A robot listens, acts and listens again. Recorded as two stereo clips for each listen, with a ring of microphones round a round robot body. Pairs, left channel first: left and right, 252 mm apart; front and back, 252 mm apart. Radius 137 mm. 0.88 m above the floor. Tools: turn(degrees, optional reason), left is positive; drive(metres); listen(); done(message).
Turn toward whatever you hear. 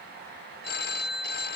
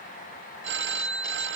turn(degrees=140, reason="The phone ringing: 140° left.")
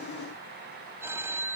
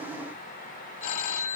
turn(degrees=-10, reason="The phone ringing is now 10° right.")
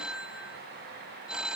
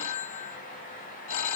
done("Found it: a phone ringing, straight ahead.")